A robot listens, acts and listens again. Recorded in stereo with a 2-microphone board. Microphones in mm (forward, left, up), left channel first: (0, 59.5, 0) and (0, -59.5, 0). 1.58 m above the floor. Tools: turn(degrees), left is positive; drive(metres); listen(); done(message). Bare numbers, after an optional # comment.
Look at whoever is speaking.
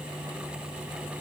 listen()
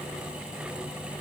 listen()
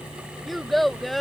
turn(30)
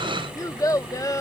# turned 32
# So it is at 145° left.
turn(145)
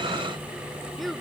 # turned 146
done("Facing the child speaking.")